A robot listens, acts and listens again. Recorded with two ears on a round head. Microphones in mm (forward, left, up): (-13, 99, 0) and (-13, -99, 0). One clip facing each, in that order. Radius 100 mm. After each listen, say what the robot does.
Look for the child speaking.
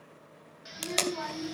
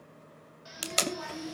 Turn 70° left.
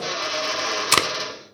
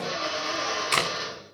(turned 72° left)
Keep listening.
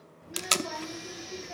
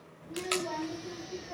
Turn 15° left.
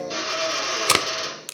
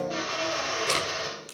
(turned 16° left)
Keep listening.
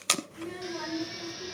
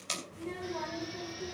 Turn 15° left.
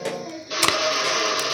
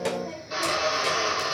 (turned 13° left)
Found it: a child speaking, straight ahead, 2 to 4 m away.